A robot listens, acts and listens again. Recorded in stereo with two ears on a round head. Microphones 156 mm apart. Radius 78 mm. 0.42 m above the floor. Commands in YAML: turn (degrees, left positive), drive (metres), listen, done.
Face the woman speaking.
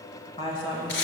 turn: 30
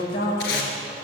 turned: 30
turn: 115
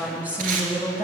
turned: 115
turn: -10
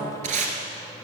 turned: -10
done: "Found it: a woman speaking, straight ahead."